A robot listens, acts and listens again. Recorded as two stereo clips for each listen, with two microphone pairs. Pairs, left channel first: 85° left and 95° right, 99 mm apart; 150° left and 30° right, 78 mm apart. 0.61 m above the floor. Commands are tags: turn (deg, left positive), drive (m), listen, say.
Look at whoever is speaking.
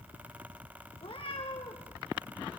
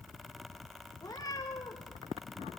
<listen/>
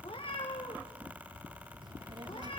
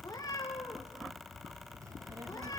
<turn deg="-65"/>
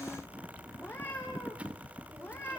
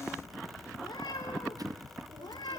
<listen/>
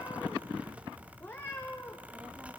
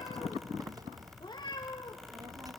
<turn deg="-20"/>
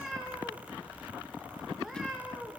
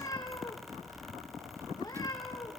<listen/>
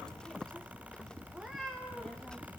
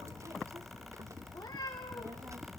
<say>Found it: a child speaking, straight ahead.</say>